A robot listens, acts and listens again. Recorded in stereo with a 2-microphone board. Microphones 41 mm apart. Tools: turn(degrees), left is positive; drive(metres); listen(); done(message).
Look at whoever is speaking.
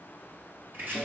listen()
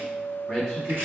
turn(degrees=15)
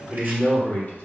turn(degrees=135)
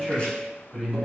turn(degrees=15)
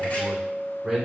done("Facing the man speaking.")